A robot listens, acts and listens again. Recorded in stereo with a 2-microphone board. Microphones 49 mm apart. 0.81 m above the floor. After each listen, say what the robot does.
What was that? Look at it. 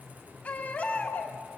Turn 30° left.
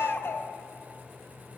Turn 120° left.
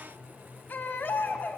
Turn 45° left.
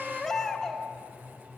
Turn 10° left.
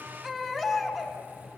Found it: a baby crying, straight ahead, 2 to 4 m away.